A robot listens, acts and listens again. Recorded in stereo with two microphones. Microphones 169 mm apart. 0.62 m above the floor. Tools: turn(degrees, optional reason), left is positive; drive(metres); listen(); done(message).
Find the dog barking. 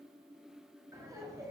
listen()
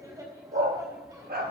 turn(degrees=-70, reason="The dog barking: about 70° right or 110° right.")
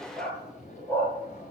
turn(degrees=15, reason="So it is at 15° left.")
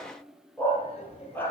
turn(degrees=15, reason="The dog barking is now 15° left.")
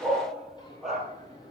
done("Facing the dog barking.")